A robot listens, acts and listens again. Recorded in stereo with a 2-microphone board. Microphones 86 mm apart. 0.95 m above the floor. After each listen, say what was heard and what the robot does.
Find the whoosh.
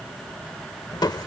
Keep listening.
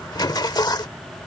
Keep listening.
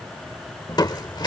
I can't make out a whoosh to turn to.